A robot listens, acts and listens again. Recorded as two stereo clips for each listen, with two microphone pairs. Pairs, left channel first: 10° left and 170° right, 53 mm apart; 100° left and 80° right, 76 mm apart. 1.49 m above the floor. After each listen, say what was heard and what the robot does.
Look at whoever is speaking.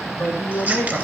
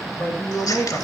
The man speaking: 40° left. Turn 40° left.
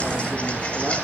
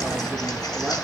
Keep listening.
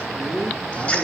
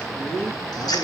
The man speaking is now 30° right. Turn 30° right.
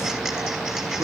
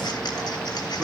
Keep listening.
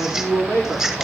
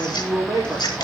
Found it: a man speaking, straight ahead, over 4 m away.